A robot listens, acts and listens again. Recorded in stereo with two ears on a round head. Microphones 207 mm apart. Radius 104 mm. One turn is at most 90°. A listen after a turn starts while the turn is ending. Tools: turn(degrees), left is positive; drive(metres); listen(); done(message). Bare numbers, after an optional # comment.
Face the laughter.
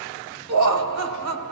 # The laughter: about 70° right or 110° right.
turn(-70)
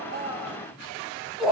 done("Facing the laughter, 1 to 2 m away.")